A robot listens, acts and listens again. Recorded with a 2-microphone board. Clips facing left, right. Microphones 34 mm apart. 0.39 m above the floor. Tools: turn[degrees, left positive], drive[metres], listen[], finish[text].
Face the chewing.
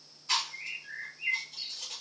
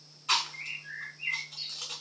Thought: The chewing: about 75° right or 105° right.
Action: turn[-75]
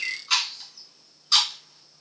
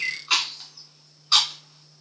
Thought: So it is at 30° right.
Action: turn[-30]
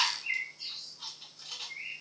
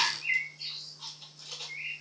Action: finish[Found it: chewing, straight ahead.]